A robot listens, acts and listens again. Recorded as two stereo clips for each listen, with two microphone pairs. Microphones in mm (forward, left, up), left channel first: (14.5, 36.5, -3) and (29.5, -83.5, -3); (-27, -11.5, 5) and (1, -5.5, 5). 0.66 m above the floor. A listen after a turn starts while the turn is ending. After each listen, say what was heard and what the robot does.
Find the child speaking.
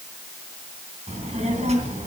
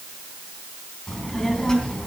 The child speaking: 105° right. Turn 105° right.
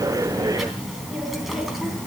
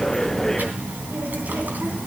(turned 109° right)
Facing the child speaking, 2 to 4 m away.